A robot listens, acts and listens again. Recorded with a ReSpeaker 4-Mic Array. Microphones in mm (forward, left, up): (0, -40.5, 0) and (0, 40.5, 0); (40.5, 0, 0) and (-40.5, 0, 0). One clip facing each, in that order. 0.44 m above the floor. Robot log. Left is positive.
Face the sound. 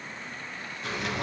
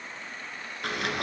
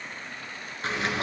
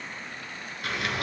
note: The sliding door: 60° left.
cmd yaw +60
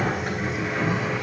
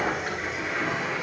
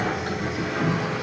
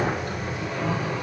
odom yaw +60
end: Found it: a sliding door, straight ahead, 2 to 4 m away.